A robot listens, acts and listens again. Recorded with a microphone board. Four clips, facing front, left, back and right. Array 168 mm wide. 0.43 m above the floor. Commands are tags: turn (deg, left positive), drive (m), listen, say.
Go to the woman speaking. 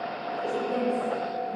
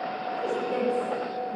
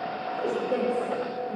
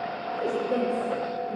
<turn deg="-130"/>
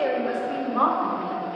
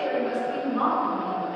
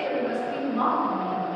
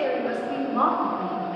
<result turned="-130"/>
<turn deg="-20"/>
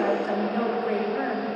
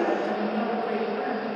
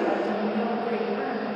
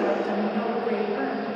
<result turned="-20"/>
<turn deg="-10"/>
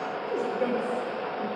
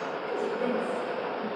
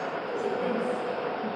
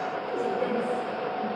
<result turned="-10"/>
<drive m="1.0"/>
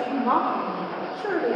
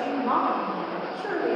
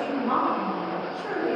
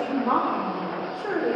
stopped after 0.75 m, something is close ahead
<say>Arrived at the woman speaking, straight ahead.</say>